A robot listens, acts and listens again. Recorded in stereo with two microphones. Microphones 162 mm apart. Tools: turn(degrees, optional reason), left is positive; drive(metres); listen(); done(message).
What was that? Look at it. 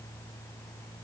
listen()
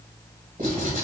turn(degrees=-50, reason="The writing: about 50° right or 130° right.")
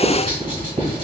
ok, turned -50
turn(degrees=-65, reason="So it is at 65° right.")
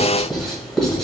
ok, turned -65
done("Facing the writing, 1 to 2 m away.")